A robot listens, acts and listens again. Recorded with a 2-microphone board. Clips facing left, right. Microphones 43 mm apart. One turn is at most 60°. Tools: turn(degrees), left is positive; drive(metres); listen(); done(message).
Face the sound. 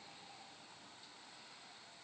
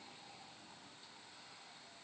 listen()
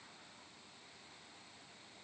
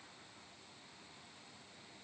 listen()
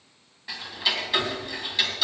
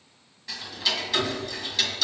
turn(degrees=20)
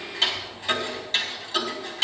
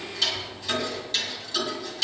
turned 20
turn(degrees=60)
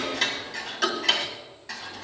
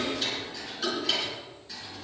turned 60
turn(degrees=60)
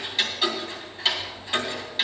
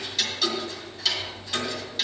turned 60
turn(degrees=25)
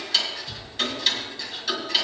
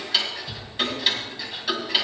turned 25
turn(degrees=-15)
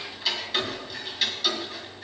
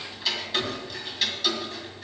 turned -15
done("Facing the ticking, 1 to 2 m away.")